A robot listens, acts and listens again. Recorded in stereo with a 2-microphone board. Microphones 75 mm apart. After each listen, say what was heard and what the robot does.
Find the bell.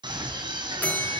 The bell: about 15° left or 165° left. Turn 15° left.
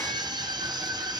Keep listening.
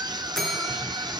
Found it: a bell, straight ahead, over 4 m away.